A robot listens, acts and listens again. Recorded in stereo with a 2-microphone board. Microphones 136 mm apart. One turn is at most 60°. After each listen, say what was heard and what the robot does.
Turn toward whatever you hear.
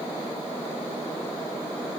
Keep listening.
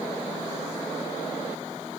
Keep listening.
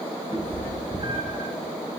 The cat meowing: about 40° right or 140° right. Turn 40° right.
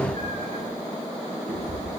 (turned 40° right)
So it is at 105° right. Turn 60° right.
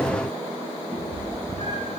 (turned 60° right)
The cat meowing is now 60° right. Turn 60° right.
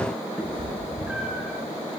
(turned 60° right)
The cat meowing is now 10° right. Turn 10° right.
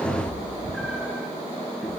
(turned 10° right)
Found it: a cat meowing, straight ahead.